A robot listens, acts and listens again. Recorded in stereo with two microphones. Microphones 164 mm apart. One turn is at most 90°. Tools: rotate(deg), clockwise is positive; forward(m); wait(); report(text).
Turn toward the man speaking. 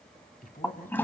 rotate(-60)
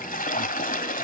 wait()
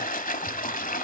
wait()
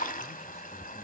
report("I heard a man speaking, but can't make it out now. It was about straight ahead or 60° left.")